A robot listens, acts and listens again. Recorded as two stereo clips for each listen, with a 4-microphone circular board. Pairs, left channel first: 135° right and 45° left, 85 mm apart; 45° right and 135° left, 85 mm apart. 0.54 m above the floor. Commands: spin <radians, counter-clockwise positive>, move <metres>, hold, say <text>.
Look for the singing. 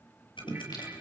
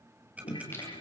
spin -1.83
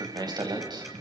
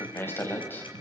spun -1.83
spin 0.35
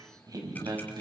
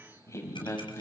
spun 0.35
spin 0.17
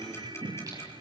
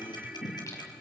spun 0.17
say Facing the singing, over 4 m away.